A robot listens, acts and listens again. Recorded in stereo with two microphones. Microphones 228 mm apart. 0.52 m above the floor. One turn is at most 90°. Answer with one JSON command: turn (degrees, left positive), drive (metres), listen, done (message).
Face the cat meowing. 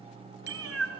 {"turn": -90}
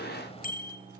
{"listen": true}
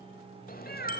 {"turn": 45}
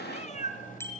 {"turn": 35}
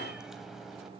{"listen": true}
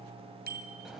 {"listen": true}
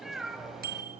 {"done": "Found it: a cat meowing, straight ahead."}